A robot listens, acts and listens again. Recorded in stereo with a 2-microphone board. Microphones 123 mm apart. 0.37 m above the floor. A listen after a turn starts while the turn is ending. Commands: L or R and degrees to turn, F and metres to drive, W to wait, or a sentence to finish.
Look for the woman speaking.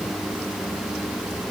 W
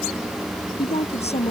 L55
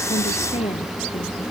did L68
L55
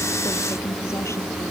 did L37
L20
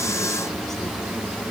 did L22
W
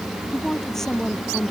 Facing the woman speaking.